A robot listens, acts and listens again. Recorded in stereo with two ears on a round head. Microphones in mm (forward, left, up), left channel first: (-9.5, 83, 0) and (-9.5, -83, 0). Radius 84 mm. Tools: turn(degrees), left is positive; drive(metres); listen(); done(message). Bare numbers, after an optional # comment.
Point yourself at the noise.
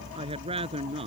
# The woman speaking: about 35° right or 145° right.
turn(-35)
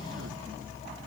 listen()
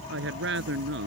# So it is at 110° right.
turn(-110)
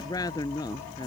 # The woman speaking is now 20° left.
turn(20)
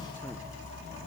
listen()
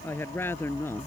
# The woman speaking is now 10° left.
turn(10)
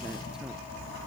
listen()
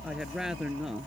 done("Facing the woman speaking.")